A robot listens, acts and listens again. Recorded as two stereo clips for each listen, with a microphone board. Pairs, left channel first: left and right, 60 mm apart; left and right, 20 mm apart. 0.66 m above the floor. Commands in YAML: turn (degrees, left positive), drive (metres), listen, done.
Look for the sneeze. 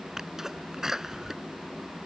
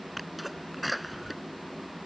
turn: -30
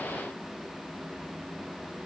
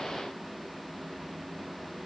listen: true
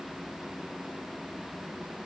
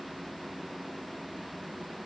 done: "I heard a sneeze, but can't make it out now. It was about 25° left or 145° right."